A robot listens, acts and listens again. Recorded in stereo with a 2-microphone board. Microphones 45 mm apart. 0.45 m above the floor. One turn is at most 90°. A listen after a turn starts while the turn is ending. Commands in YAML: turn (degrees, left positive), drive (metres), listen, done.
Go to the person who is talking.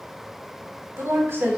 turn: -65
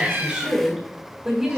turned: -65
turn: -10
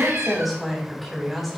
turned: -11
drive: 1.0
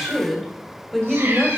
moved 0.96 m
drive: 1.0
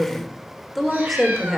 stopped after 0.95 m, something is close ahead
done: "I am next to the woman speaking."